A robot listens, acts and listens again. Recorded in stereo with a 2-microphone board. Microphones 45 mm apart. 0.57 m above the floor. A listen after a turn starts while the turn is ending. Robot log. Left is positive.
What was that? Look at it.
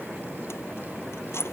cmd yaw +90
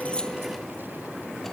cmd idle
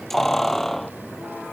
note: The keys jangling is now 10° left.
cmd yaw +10
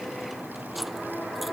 cmd idle
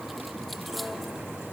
cmd idle
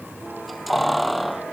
end: Facing the keys jangling.